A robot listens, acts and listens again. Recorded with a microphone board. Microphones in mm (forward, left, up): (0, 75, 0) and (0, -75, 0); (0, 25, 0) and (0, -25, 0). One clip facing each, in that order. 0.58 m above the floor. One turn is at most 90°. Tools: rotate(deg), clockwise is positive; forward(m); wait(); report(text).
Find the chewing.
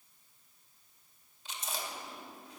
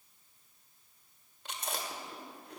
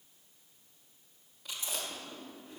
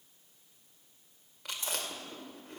rotate(65)
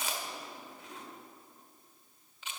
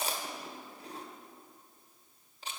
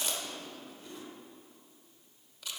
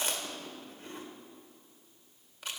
rotate(40)
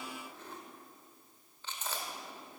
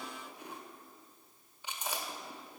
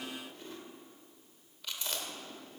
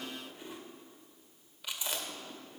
rotate(15)
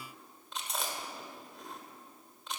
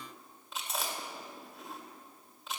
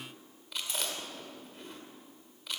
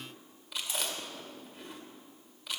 report("Found it: chewing, straight ahead, 1 to 2 m away.")